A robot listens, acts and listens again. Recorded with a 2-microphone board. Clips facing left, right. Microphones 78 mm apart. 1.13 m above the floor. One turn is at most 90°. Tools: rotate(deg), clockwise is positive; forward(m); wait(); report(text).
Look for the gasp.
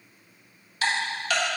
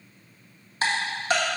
wait()
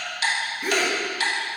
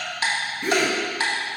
rotate(-30)
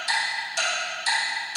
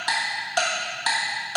wait()
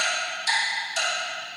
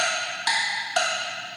report("I heard a gasp, but can't make it out now. It was about 25° right or 145° left.")